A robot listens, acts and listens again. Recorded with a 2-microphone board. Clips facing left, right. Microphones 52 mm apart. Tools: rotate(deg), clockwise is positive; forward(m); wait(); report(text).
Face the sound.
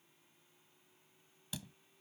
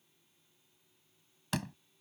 rotate(90)
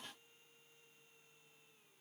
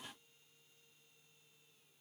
report("Facing where the door slam came from. I can't hear it now.")